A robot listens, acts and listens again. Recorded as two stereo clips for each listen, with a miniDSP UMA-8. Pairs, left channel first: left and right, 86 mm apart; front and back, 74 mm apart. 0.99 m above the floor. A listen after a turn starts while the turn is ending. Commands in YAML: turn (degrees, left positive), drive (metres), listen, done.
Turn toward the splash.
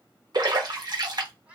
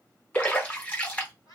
turn: -65
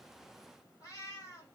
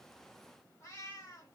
done: "I heard a splash from this way, but can't make it out now."